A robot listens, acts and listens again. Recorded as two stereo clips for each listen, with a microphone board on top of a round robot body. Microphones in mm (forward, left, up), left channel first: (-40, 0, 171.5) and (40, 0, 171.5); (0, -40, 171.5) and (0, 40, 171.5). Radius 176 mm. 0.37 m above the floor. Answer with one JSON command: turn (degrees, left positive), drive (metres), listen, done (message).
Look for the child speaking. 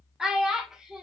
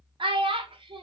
{"turn": 85}
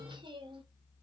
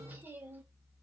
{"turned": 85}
{"turn": 25}
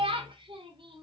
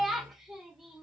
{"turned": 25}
{"done": "Facing the child speaking."}